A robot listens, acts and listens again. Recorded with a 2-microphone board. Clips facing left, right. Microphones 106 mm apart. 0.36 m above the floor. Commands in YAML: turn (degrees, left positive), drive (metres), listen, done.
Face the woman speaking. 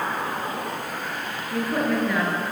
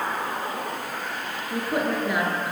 turn: -20
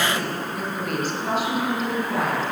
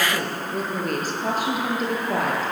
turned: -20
turn: -140
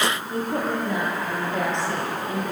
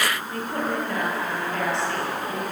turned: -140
turn: 20
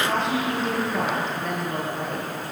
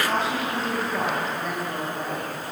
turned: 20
done: "Found it: a woman speaking, straight ahead."